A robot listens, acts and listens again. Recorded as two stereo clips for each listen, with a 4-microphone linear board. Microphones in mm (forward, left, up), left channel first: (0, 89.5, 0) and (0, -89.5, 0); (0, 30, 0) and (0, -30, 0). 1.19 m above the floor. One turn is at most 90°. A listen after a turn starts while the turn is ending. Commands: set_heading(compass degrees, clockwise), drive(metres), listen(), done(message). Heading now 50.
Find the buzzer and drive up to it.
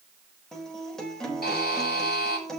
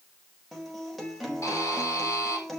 set_heading(350)
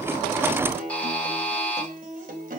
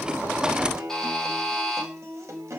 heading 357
set_heading(347)
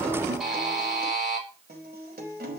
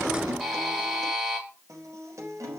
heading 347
drive(1.0)
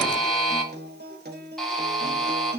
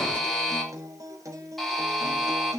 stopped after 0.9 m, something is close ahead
done("Blocked. The buzzer is further on, straight ahead.")